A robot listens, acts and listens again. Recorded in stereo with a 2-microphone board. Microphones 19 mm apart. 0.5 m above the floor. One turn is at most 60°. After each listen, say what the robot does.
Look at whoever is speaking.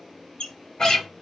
Keep listening.
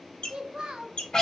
Turn 60° right.
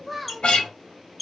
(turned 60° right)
Found it: a child speaking, straight ahead.